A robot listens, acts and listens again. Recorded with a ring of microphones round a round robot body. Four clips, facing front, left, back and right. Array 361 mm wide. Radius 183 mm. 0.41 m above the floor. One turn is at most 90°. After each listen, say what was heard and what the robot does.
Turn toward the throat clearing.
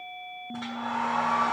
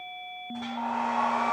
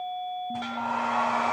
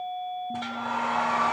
Keep listening.
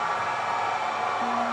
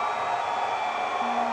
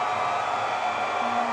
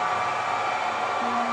Keep listening.
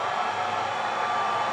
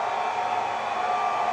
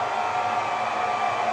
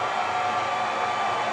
I can't make out throat clearing to turn to.